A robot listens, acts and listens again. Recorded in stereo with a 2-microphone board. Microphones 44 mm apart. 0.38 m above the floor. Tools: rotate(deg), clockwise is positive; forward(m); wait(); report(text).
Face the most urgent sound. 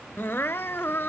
rotate(-65)
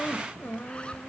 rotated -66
rotate(-50)
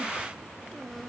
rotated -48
wait()
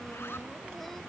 wait()
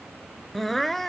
report("Found it: crying, straight ahead.")